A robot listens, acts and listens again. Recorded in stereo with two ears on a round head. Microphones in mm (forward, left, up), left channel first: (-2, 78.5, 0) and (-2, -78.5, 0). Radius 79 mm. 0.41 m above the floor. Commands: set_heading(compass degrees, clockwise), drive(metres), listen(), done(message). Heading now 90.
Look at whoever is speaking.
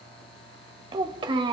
set_heading(115)
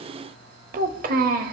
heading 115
set_heading(235)
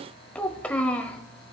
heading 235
set_heading(225)
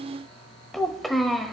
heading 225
done("Found it: a child speaking, straight ahead, under 1 m away.")